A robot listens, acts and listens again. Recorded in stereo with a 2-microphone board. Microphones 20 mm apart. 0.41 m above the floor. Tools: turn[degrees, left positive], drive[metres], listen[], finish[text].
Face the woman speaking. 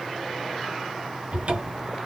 Action: listen[]
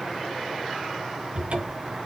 Action: listen[]
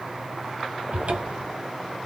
Action: finish[I can't make out a woman speaking, only a cupboard door.]